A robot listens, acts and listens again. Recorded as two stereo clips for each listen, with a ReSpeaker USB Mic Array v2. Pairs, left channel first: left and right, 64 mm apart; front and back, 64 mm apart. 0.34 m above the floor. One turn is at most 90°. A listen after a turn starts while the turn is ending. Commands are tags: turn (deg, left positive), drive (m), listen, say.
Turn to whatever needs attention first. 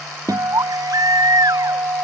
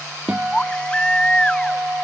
<turn deg="-75"/>
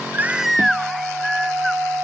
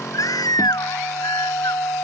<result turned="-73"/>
<say>Found it: a baby crying, straight ahead.</say>